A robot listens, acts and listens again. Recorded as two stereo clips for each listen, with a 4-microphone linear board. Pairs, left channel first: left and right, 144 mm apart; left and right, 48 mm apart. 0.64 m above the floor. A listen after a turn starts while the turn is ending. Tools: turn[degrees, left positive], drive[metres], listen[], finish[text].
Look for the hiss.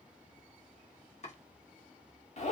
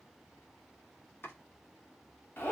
Action: listen[]
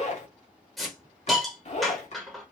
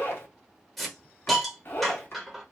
Action: turn[30]
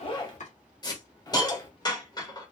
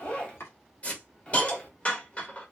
Thought: So it is at 150° left.
Action: turn[150]
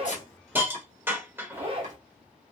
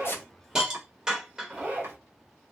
Thought: The hiss is now 15° right.
Action: turn[-15]
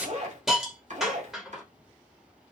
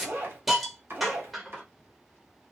Action: finish[Facing the hiss.]